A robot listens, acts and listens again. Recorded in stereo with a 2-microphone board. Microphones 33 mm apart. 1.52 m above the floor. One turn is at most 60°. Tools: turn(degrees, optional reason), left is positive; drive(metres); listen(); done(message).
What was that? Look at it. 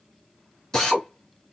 turn(degrees=15, reason="The drill: about 15° left or 165° left.")
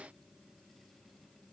listen()
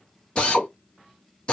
turn(degrees=60, reason="So it is at 150° left.")
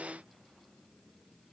turn(degrees=60, reason="Nothing new. It was at 90° left.")
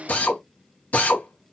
turn(degrees=50, reason="The drill is now 50° left.")
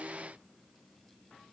listen()
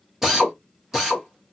turn(degrees=-10, reason="The drill is now 10° right.")
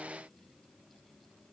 listen()
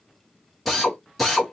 done("Facing the drill, 1 to 2 m away.")